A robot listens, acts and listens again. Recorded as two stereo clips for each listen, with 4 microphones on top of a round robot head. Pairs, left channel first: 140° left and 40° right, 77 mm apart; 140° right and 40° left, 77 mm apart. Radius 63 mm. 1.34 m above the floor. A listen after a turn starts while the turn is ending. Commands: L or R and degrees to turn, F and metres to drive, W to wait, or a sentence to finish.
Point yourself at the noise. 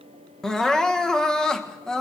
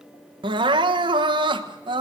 L60
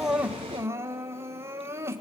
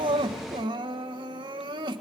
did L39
L20
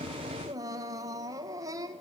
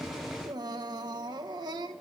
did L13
Facing the crying.